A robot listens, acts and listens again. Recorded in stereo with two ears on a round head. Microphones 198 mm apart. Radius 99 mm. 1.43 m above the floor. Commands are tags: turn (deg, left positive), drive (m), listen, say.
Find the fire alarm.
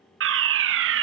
<turn deg="-55"/>
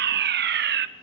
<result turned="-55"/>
<turn deg="-55"/>
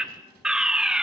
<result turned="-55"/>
<say>Found it: a fire alarm, straight ahead, 1 to 2 m away.</say>